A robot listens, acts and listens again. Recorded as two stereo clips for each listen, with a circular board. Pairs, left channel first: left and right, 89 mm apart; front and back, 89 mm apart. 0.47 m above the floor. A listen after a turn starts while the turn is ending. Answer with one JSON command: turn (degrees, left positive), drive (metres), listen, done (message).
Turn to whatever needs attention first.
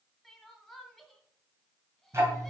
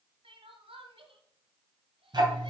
{"turn": 175}
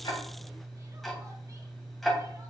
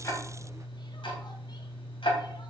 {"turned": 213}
{"turn": -35}
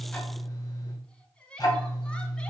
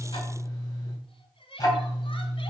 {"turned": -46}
{"turn": 10}
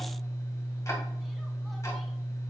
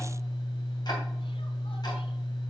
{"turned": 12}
{"listen": true}
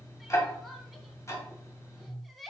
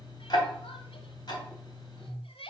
{"done": "Found it: crying, straight ahead."}